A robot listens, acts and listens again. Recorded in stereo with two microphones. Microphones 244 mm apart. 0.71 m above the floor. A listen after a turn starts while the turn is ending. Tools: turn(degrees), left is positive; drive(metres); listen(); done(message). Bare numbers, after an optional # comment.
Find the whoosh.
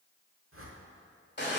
# The whoosh: about 65° right or 115° right.
turn(-65)
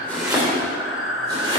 listen()
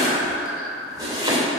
listen()
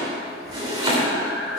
done("I heard a whoosh, but can't make it out now. It was about straight ahead or 50° right.")